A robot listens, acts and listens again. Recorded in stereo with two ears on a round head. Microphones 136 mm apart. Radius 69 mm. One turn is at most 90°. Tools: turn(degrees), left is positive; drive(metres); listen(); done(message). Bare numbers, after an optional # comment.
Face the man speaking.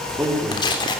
turn(-30)
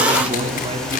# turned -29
# So it is at 140° right.
turn(-90)
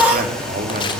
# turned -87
# The man speaking is now 50° right.
turn(-50)
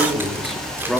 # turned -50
done("Facing the man speaking, over 4 m away.")